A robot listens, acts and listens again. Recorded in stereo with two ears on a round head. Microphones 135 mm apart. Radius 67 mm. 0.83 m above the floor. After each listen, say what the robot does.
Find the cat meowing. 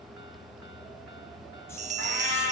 Turn 90° left.
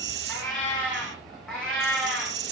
Facing the cat meowing, over 4 m away.